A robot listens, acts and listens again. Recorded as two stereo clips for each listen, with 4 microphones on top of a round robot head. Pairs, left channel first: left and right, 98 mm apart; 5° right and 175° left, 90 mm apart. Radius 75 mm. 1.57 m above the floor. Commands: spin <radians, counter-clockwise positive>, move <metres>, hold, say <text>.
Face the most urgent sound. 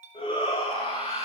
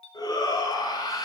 spin 0.70
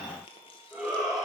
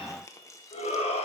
say Facing the shout.